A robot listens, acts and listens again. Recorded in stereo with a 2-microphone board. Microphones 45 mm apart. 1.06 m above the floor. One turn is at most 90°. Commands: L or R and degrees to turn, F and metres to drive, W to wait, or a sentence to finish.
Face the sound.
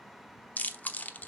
L35
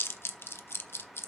L90
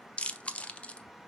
L30
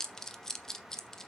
L15
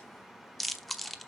Found it: chewing, straight ahead.